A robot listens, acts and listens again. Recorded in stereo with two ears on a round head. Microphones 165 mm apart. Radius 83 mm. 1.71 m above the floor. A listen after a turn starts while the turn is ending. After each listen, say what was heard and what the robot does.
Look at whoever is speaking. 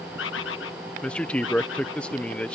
Turn 30° left.
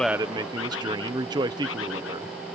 So it is at 25° right. Turn 25° right.
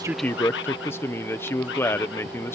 The man speaking is now 10° left. Turn 10° left.
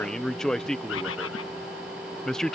Facing the man speaking.